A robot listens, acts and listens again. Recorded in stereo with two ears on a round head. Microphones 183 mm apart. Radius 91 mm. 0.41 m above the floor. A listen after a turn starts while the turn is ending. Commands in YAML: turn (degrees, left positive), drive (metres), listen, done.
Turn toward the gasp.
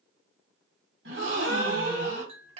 turn: -55
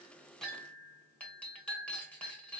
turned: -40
listen: true
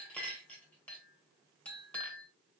done: "I heard a gasp, but can't make it out now. It was about 15° right or 85° right."